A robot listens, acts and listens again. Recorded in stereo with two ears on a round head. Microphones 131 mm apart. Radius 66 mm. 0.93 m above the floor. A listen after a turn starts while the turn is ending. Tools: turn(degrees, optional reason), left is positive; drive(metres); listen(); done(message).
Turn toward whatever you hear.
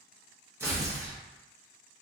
turn(degrees=-20, reason="The tearing paper: about 20° right or 160° right.")
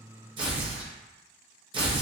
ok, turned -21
turn(degrees=-140, reason="So it is at 140° right.")
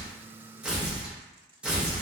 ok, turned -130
turn(degrees=-10, reason="The tearing paper is now 10° right.")
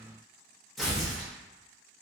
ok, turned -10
done("Facing the tearing paper, under 1 m away.")